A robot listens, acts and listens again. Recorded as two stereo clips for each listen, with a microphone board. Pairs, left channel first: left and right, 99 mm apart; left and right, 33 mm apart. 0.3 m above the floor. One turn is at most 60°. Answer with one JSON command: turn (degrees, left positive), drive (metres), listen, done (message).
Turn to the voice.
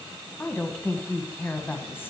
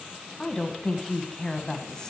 {"turn": 20}
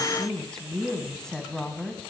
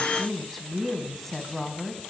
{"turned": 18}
{"done": "Facing the woman speaking, 1 to 2 m away."}